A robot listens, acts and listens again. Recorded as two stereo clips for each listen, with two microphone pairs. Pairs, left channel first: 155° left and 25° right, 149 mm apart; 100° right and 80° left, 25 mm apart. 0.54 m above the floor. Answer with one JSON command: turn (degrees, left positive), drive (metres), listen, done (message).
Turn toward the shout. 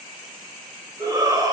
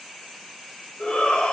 {"turn": -85}
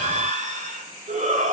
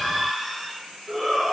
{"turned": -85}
{"done": "Facing the shout, 2 to 4 m away."}